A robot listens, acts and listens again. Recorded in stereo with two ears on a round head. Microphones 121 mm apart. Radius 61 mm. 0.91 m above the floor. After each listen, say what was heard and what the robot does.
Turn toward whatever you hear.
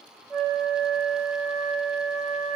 Turn 30° right.
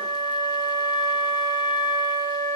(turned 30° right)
So it is at 145° right. Turn 145° right.
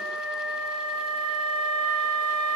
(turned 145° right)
The flute is now 10° left. Turn 10° left.
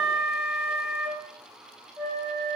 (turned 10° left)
Found it: a flute, straight ahead, 2 to 4 m away.